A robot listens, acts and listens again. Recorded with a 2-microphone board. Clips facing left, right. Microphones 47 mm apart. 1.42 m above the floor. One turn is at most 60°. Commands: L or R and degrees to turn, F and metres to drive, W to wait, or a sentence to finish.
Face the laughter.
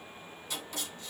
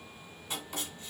W
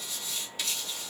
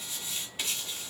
W
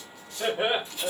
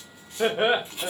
R60
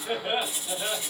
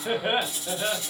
R40
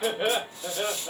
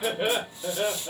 L10
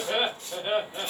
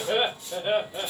Found it: laughter, straight ahead, 2 to 4 m away.